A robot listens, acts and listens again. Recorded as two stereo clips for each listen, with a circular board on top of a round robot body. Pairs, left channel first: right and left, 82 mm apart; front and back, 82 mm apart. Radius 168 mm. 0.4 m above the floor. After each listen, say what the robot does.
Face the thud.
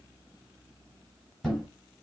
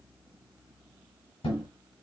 Found it: a thud, straight ahead, 1 to 2 m away.